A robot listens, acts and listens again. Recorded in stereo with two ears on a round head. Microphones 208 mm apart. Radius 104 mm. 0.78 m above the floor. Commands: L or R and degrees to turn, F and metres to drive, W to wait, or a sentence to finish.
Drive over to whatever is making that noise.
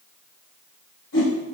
L50
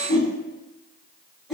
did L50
F1.0
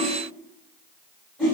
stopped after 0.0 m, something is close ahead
Something is in my way. I am facing the whoosh but have not reached it.